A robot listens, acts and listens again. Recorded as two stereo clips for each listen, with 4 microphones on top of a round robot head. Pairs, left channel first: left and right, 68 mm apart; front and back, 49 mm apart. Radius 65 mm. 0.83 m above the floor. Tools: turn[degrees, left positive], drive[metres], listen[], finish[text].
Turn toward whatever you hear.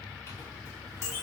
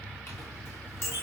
Thought: The clink: 40° left.
Action: turn[40]
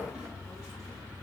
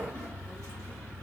Action: listen[]
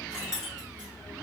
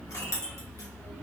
Thought: The clink is now 10° right.
Action: turn[-10]
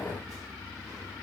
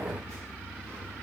Action: listen[]
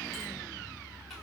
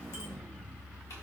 Action: listen[]
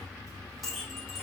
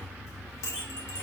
Action: finish[Found it: a clink, straight ahead, 1 to 2 m away.]